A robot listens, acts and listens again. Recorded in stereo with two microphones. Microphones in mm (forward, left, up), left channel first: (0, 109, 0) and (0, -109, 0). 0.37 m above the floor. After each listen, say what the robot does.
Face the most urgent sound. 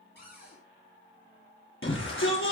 Turn 70° left.
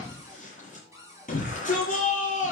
Turn 40° left.
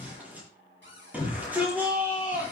Turn 10° right.
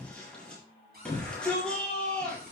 Facing the shout, over 4 m away.